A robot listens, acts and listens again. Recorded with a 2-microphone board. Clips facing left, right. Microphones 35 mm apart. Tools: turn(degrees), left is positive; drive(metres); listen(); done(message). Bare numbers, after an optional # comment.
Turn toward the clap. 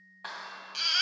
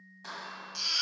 # The clap: about 40° left or 140° left.
turn(40)
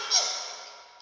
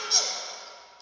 listen()
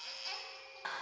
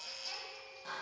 # So it is at 95° left.
turn(95)
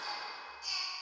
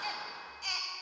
# The clap is now 15° right.
turn(-15)
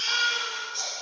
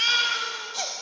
listen()
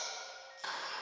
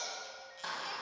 done("Found it: a clap, straight ahead.")